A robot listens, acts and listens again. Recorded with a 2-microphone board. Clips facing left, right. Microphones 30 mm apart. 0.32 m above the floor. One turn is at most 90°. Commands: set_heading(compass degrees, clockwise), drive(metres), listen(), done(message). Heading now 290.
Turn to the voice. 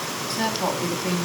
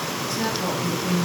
set_heading(225)
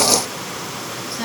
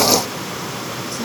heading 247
listen()
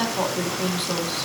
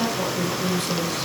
set_heading(197)
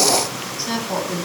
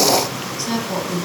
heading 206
set_heading(196)
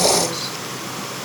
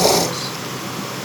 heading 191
listen()
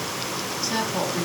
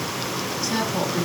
done("Facing the woman speaking, 2 to 4 m away.")